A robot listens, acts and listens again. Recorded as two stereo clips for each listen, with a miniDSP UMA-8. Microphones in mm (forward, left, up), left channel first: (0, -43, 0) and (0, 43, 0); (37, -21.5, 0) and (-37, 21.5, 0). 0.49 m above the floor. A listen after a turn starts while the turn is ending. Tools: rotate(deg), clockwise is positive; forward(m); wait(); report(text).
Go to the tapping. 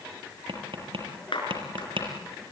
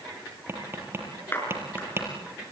rotate(-85)
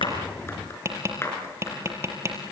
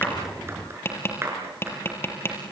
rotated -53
rotate(-30)
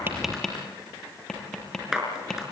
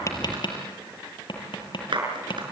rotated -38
forward(1.0)
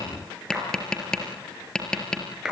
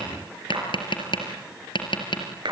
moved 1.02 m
rotate(10)
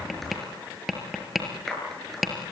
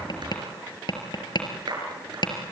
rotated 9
forward(1.0)
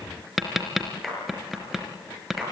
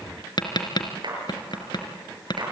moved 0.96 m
forward(1.0)
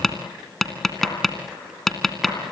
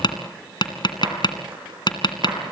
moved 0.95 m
forward(1.0)
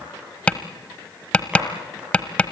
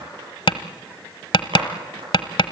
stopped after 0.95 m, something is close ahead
rotate(15)
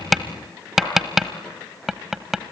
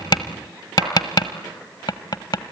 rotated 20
report("Arrived at the tapping, straight ahead.")